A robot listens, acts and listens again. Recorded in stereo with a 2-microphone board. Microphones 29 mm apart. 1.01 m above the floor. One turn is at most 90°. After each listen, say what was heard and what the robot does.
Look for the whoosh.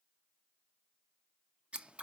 Keep listening.
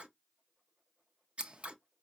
Keep listening.
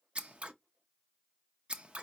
I can't make out a whoosh, only scissors.